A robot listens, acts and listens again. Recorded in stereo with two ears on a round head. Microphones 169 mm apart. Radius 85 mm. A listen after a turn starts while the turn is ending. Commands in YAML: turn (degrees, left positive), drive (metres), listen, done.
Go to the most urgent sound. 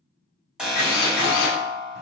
turn: -30
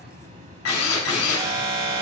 turn: -150
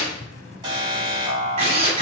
turn: -20
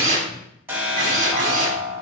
turn: -10
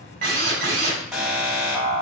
drive: 1.0
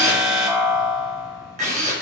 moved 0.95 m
drive: 1.0
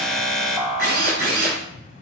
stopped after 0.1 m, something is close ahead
done: "Arrived at the alarm, straight ahead."